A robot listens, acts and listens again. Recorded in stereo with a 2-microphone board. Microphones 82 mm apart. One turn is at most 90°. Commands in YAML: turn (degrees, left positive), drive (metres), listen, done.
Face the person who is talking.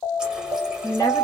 turn: 45
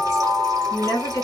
turn: 80
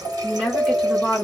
turn: 10
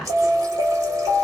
done: "Facing the woman speaking, 1 to 2 m away."